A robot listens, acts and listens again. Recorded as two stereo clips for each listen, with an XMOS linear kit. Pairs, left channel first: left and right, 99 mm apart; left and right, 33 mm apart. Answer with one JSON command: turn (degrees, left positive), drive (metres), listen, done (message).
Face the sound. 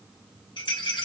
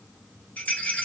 {"turn": 55}
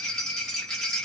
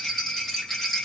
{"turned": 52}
{"turn": 10}
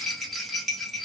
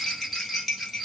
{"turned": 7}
{"done": "Found it: a rattle, straight ahead."}